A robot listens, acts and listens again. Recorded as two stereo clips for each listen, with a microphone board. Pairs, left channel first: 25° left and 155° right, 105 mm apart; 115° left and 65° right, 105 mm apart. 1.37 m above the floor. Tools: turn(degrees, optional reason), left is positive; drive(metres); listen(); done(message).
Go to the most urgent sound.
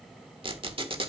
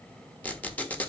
listen()
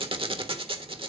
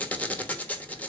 listen()
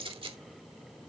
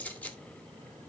done("I can't make out anything urgent to turn to.")